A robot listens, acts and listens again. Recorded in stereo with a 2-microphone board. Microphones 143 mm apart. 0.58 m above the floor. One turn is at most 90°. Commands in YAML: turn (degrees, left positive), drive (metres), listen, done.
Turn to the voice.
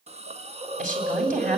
turn: -65
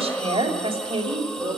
turn: -35
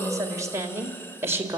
turn: -15
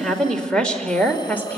turn: 10
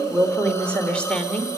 done: "Found it: a woman speaking, straight ahead, 2 to 4 m away."